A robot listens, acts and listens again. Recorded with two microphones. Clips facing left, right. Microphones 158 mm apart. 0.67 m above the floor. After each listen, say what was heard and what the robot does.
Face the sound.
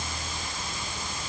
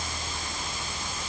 Keep listening.
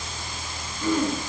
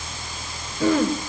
The throat clearing: about 75° right or 105° right. Turn 75° right.
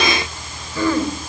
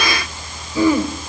So it is at 15° right. Turn 15° right.
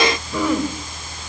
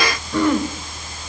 Facing the throat clearing.